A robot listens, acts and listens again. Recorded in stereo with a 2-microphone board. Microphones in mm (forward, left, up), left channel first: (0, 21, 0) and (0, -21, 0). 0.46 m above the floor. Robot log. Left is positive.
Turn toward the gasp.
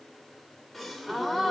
cmd yaw +30
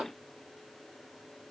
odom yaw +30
cmd idle
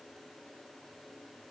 end: I heard a gasp, but can't make it out now. It was about 25° right or 145° left.